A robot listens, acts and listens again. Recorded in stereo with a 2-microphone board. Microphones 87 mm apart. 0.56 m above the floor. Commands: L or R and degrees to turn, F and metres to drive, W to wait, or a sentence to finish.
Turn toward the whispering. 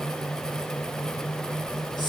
L55
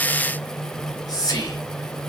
L55
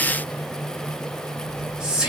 R10
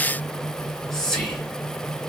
Found it: whispering, straight ahead.